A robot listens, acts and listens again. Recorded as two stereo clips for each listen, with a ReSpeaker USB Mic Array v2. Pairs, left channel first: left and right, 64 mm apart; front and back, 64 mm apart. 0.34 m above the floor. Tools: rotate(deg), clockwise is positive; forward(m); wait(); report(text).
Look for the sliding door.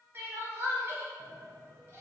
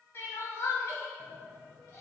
rotate(80)
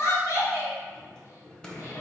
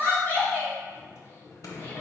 rotate(-15)
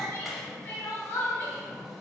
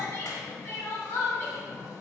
report("Facing the sliding door, under 1 m away.")